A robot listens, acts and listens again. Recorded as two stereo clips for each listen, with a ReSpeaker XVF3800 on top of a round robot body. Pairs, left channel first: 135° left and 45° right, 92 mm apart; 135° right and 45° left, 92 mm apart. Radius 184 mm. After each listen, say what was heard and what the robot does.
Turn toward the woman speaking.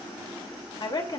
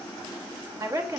The woman speaking: 90° left. Turn 90° left.
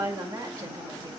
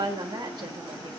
Found it: a woman speaking, straight ahead.